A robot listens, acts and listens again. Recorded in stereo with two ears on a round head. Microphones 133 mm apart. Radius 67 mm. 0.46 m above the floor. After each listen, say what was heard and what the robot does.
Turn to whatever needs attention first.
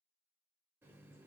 Keep listening.
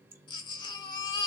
The baby crying: about 30° left or 150° left. Turn 30° left.
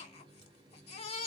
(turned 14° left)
So it is at 135° left. Turn 135° left.
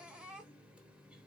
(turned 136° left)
The baby crying is now 10° right. Turn 10° right.
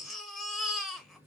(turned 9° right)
Found it: a baby crying, straight ahead, 1 to 2 m away.